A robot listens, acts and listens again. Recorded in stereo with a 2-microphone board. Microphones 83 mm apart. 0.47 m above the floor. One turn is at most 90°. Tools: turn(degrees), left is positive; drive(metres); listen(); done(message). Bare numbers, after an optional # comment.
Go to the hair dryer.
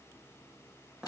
listen()
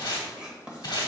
listen()
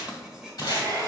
# The hair dryer: about 45° right or 135° right.
turn(-45)
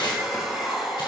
drive(1.0)
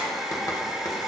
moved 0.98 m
drive(1.0)
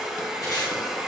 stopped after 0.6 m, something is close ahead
# The hair dryer is now 10° right.
turn(-10)
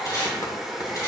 done("I am next to the hair dryer.")